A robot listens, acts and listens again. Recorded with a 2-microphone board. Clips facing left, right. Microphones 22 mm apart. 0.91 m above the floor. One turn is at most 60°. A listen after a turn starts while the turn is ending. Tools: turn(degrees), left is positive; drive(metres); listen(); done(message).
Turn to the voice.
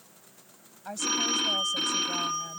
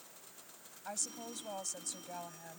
turn(degrees=30)
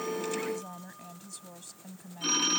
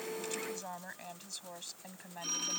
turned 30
turn(degrees=-30)
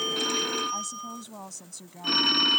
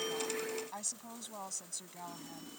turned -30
done("Found it: a woman speaking, straight ahead.")